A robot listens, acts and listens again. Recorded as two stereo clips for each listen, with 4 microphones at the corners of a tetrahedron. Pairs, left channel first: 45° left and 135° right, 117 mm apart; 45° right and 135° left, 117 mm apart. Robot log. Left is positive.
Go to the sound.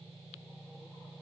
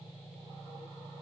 cmd idle
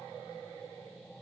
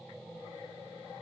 cmd idle
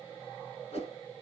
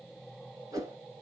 note: The whoosh: 75° left.
cmd yaw +75
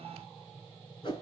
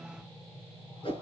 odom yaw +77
cmd fwd 1.0
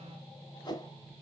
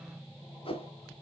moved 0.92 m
cmd fwd 1.0
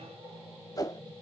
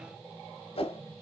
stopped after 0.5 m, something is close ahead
note: The whoosh is now 10° right.
cmd yaw -10
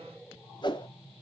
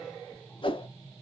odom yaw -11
end: I am next to the whoosh.